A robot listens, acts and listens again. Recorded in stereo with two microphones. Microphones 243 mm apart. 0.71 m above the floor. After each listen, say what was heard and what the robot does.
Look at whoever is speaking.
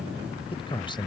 The man speaking: about 20° left or 160° left. Turn 20° left.
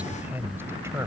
So it is at 10° right. Turn 10° right.
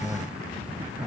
The man speaking is now 10° right. Turn 10° right.
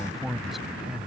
Facing the man speaking.